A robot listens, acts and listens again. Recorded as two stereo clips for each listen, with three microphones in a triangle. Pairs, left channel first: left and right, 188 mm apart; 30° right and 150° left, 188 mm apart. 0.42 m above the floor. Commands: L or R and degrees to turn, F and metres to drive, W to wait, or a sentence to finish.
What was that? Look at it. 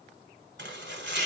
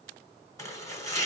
R105
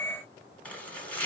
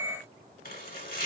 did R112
Facing the chopping, 1 to 2 m away.